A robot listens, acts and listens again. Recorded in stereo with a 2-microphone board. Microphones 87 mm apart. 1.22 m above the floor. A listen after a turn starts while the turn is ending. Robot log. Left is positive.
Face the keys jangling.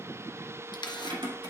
note: The keys jangling: about 70° right or 110° right.
cmd yaw -70
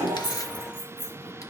note: So it is at 45° right.
cmd yaw -45
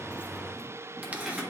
end: Found it: keys jangling, straight ahead, 2 to 4 m away.